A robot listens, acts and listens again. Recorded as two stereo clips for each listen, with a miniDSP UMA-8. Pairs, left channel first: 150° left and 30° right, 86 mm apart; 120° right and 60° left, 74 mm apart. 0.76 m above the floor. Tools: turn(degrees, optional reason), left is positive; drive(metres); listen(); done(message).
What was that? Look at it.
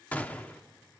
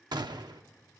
turn(degrees=75, reason="The gunshot: 75° left.")
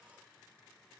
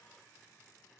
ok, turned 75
done("Facing where the gunshot came from. I can't hear it now.")